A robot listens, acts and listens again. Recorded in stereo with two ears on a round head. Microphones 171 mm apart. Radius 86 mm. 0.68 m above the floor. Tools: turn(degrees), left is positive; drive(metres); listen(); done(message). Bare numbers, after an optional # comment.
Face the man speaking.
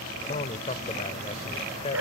# The man speaking: about 35° left or 145° left.
turn(35)
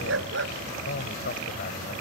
# So it is at 125° left.
turn(125)
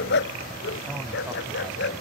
listen()
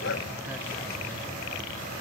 listen()
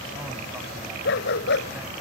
done("Facing where the man speaking came from. I can't hear it now.")